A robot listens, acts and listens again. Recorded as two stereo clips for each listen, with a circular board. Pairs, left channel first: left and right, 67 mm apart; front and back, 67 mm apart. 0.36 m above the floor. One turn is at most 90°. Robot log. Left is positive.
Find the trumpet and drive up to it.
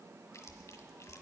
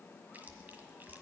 cmd idle
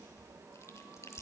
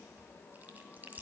cmd idle
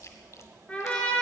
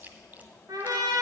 note: The trumpet: 160° left.
cmd yaw +90
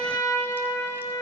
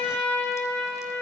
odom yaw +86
note: The trumpet is now 75° left.
cmd yaw +75
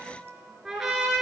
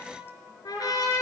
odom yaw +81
cmd fwd 1.0
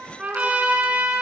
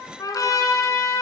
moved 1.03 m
note: The trumpet is now 20° right.
cmd yaw -20
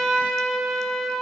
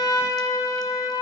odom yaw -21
cmd fwd 1.0
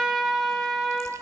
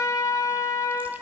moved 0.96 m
cmd fwd 1.0
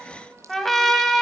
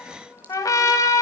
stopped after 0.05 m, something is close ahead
end: I am next to the trumpet.